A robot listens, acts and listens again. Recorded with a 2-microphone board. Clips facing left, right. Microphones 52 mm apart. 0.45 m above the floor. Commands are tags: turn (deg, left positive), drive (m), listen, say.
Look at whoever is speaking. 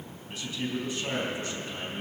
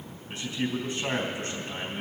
<turn deg="-35"/>
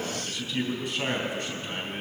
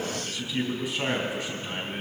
<say>Facing the man speaking.</say>